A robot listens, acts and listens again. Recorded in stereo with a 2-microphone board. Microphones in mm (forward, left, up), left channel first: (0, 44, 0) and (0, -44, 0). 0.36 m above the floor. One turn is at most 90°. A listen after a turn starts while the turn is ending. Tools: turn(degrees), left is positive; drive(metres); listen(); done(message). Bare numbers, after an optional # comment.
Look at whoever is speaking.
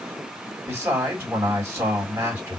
# The man speaking: about 30° right or 150° right.
turn(-30)
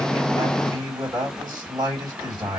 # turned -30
# So it is at 115° right.
turn(-90)
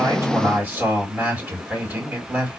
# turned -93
# The man speaking is now 20° right.
turn(-20)
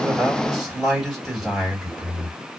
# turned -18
done("Facing the man speaking, 2 to 4 m away.")